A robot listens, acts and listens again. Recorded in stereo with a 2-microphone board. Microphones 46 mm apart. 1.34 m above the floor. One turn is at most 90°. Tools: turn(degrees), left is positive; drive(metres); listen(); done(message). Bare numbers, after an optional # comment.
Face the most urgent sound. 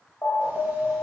# The alarm: about 65° left or 115° left.
turn(65)
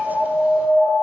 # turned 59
# So it is at 55° left.
turn(55)
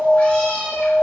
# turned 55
done("Facing the alarm.")